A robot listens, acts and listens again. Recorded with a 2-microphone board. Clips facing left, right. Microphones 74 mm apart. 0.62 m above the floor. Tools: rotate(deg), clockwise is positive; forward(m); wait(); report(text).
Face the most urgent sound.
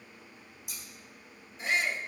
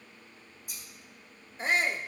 rotate(35)
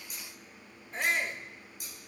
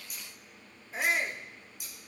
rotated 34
report("Facing the shout.")